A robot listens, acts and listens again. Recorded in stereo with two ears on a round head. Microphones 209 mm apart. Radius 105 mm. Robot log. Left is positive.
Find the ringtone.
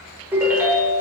cmd yaw -30
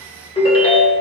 note: So it is at 25° left.
cmd yaw +25
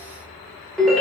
end: Found it: a ringtone, straight ahead.